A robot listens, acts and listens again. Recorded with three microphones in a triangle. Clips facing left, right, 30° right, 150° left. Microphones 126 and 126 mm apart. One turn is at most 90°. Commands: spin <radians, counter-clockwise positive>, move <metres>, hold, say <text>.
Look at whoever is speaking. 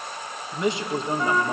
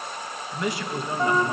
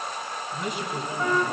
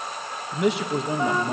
spin 1.57
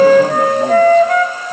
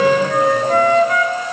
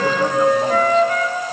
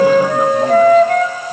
spin 1.13
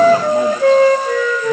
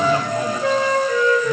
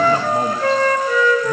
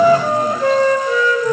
hold
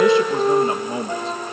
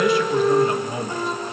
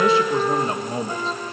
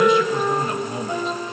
spin 0.44
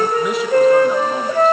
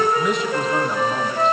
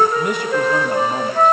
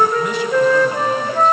hold
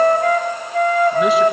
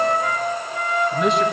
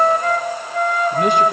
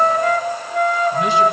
hold
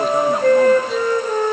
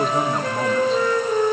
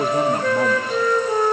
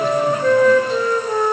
say Facing where the man speaking came from. I can't hear it now.